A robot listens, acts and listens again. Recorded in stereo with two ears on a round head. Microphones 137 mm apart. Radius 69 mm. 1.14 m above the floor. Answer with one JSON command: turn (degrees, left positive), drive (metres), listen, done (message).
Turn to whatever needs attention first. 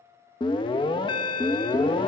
{"turn": 30}
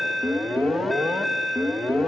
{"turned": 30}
{"done": "Facing the alarm."}